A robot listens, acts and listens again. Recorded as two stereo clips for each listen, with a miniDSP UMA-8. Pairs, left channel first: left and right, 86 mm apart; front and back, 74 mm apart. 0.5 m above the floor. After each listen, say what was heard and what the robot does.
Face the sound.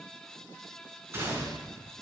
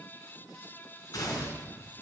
The gunshot: 30° right. Turn 30° right.
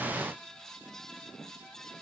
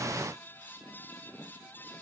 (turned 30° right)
Facing where the gunshot came from. I can't hear it now.